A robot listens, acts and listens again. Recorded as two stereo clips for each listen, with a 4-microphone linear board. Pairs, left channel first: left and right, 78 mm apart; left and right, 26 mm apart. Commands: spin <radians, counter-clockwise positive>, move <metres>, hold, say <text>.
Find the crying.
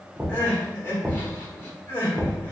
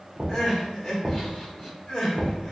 spin 0.52
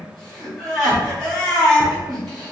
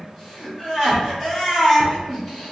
say Facing the crying.